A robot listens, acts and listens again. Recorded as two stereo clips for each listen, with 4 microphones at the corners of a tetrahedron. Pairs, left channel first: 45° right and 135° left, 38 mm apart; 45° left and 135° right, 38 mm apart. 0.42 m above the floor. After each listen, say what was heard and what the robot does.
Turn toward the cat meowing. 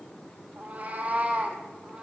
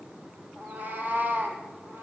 The cat meowing: 155° right. Turn 155° right.
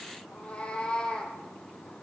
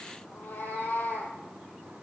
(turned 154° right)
The cat meowing is now 30° left. Turn 30° left.
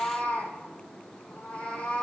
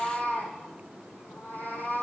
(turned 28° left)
The cat meowing is now 20° left. Turn 20° left.
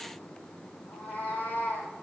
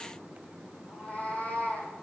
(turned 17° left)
Facing the cat meowing, 2 to 4 m away.